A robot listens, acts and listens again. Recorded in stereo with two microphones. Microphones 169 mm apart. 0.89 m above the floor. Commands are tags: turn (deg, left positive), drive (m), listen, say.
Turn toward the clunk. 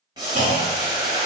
<turn deg="-45"/>
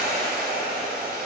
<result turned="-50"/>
<listen/>
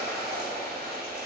<say>I heard a clunk, but can't make it out now. It was about 5° left or 85° right.</say>